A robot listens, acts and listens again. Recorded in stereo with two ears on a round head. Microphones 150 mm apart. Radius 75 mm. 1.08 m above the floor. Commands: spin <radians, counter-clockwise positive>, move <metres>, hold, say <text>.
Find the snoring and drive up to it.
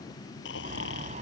spin 1.57
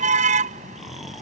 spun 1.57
move 1.0
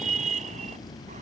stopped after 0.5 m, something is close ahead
say Something is in my way. I am facing the snoring but have not reached it.